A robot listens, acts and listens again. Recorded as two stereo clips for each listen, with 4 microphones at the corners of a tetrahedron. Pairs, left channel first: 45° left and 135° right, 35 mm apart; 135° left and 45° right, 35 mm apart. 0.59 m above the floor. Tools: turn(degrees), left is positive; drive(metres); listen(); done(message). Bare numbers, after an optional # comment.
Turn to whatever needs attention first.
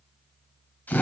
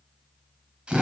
listen()
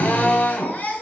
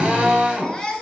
# The baby crying: 65° left.
turn(65)
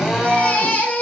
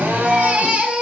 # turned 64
done("Facing the baby crying.")